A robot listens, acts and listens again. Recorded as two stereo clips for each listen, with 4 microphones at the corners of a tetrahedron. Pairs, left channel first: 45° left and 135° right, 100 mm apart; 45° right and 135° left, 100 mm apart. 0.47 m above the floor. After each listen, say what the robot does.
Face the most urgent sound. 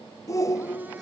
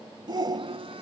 Turn 95° left.
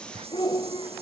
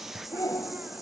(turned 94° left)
Facing the shout.